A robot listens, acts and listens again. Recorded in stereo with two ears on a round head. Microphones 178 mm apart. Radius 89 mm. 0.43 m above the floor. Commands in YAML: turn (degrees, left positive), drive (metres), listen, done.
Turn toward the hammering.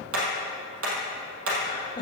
turn: -75
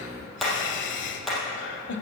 done: "Found it: hammering, straight ahead, 2 to 4 m away."